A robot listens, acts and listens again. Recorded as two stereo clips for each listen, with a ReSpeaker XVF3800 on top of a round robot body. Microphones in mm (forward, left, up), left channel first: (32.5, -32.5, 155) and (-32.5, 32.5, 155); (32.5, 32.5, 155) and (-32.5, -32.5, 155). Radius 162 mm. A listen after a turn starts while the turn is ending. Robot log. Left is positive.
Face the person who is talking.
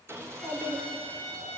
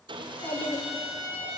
note: The child speaking: 80° left.
cmd yaw +80
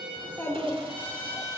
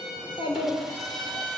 note: The child speaking is now 20° left.
cmd yaw +20
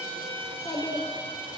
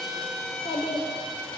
end: Facing the child speaking.